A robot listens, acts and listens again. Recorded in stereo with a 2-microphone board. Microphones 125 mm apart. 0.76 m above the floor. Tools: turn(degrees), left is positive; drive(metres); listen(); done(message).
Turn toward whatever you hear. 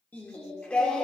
turn(degrees=30)
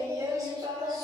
turn(degrees=-35)
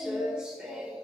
turn(degrees=-10)
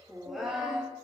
done("Found it: singing, straight ahead.")